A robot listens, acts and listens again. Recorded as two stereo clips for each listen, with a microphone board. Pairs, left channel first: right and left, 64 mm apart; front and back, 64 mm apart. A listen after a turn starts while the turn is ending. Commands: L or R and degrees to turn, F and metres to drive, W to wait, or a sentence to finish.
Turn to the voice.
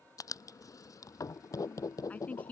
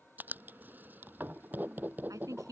R155
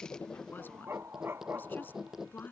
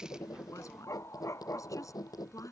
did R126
R30
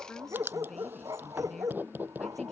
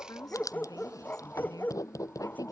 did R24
W
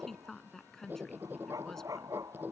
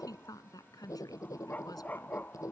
Found it: a woman speaking, straight ahead.